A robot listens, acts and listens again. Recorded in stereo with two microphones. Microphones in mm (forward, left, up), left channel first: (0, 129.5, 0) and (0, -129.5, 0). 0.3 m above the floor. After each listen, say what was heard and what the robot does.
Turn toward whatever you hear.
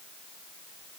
Keep listening.
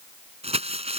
The crumpling: about 25° right or 155° right. Turn 25° right.
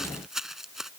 Facing the crumpling.